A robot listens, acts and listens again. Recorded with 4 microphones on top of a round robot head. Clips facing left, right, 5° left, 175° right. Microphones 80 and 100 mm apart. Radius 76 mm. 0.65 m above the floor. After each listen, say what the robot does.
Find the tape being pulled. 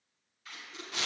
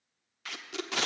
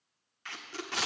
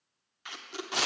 Turn 100° right.
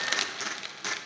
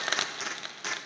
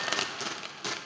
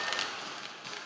Facing the tape being pulled, under 1 m away.